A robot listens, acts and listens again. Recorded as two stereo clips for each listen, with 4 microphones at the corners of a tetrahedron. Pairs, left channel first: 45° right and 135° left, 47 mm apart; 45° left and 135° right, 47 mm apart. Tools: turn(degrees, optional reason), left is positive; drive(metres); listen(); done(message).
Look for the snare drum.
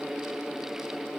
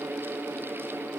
listen()
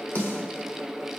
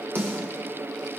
turn(degrees=-95, reason="The snare drum: 95° right.")
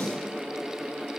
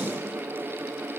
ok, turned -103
turn(degrees=10, reason="Nothing new. It was at 10° left.")
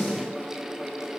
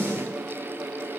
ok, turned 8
done("Facing the snare drum, over 4 m away.")